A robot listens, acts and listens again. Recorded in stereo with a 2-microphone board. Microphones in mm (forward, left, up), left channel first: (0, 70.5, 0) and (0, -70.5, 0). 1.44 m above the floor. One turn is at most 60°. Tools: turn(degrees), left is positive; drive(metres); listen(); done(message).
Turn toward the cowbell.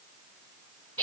listen()
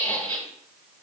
listen()
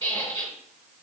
done("I can't make out a cowbell, only a squeak.")